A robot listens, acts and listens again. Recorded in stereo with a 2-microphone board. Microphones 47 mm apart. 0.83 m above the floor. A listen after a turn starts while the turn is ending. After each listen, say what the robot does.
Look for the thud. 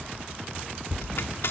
Turn 20° right.
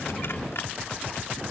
Keep listening.
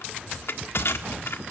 I heard a thud, but can't make it out now. It was about straight ahead or 140° right.